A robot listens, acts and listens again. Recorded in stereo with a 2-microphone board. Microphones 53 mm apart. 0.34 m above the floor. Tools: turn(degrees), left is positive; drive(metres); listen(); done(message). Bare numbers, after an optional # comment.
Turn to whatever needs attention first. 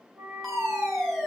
turn(30)
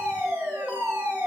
# So it is at 30° right.
turn(-30)
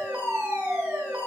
# The fire alarm is now 25° right.
turn(-25)
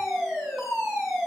done("Found it: a fire alarm, straight ahead, 2 to 4 m away.")